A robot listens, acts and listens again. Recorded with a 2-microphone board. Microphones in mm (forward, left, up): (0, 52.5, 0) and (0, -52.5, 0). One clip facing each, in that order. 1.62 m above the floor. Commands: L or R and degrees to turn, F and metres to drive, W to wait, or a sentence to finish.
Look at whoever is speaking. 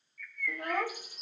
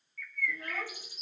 L60
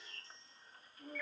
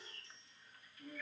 L40
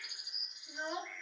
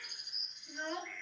L15
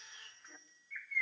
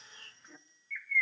Found it: a child speaking, straight ahead, under 1 m away.